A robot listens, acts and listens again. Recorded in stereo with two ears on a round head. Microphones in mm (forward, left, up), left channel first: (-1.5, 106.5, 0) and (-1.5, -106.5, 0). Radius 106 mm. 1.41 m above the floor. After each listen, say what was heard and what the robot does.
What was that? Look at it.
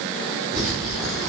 Turn 30° right.
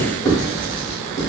So it is at 15° left. Turn 15° left.
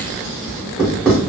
Found it: writing, straight ahead.